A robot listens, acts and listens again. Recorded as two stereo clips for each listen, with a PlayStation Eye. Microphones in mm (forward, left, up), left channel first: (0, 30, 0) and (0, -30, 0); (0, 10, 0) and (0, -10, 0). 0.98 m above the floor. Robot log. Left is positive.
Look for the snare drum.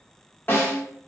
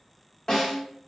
note: The snare drum: about 35° left or 145° left.
cmd yaw +35
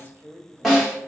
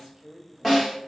end: Facing the snare drum.